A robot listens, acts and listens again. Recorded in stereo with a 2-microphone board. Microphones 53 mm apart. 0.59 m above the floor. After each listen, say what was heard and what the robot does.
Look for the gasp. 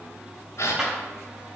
The gasp: about 65° left or 115° left. Turn 65° left.
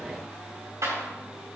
Keep listening.
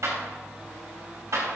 I heard a gasp, but can't make it out now. It was about straight ahead or 50° left.